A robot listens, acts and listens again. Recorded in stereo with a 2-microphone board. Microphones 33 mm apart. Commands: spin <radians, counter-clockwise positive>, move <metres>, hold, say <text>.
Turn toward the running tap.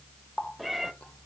spin 0.70
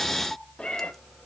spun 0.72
hold
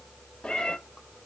hold
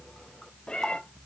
say I heard a running tap, but can't make it out now. It was about straight ahead or 100° left.